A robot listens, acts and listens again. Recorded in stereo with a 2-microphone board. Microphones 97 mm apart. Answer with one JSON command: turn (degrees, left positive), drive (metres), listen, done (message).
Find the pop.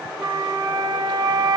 {"listen": true}
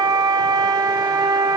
{"listen": true}
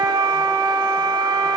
{"done": "I can't make out a pop to turn to."}